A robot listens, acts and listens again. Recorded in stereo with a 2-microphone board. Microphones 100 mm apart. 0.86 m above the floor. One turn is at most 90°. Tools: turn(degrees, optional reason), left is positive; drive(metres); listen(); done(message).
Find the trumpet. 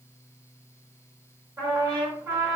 turn(degrees=-35, reason="The trumpet: about 35° right or 145° right.")
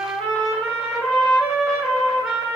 done("Found it: a trumpet, straight ahead.")